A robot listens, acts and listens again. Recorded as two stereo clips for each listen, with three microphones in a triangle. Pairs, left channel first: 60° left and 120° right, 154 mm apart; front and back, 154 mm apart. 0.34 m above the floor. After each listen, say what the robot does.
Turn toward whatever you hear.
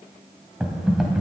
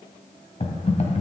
Turn 35° right.
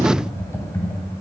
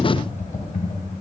Turn 10° right.
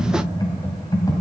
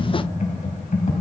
Facing the typing on a keyboard.